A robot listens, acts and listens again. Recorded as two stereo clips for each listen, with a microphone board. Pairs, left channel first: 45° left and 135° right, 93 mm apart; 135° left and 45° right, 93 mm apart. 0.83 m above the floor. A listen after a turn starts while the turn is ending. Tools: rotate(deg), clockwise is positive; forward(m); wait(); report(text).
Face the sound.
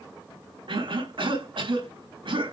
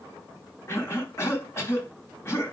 rotate(165)
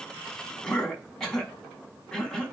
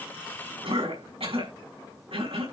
rotate(40)
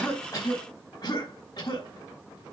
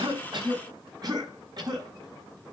report("Found it: a cough, straight ahead.")